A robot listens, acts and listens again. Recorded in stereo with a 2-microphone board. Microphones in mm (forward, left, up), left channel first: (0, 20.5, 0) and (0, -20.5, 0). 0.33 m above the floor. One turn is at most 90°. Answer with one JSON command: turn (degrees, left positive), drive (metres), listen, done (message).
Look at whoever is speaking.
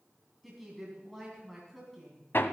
{"turn": 30}
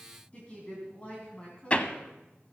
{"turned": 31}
{"turn": 90}
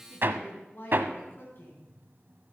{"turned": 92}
{"turn": 60}
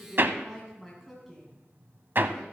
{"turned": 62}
{"done": "Found it: a woman speaking, straight ahead, 2 to 4 m away."}